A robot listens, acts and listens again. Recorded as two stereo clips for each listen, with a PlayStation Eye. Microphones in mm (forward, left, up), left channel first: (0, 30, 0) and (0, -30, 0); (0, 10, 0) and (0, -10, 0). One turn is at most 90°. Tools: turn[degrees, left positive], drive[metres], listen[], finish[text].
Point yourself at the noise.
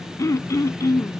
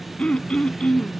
Thought: The throat clearing: about 70° left or 110° left.
Action: turn[70]
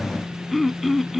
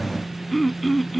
Action: finish[Found it: throat clearing, straight ahead.]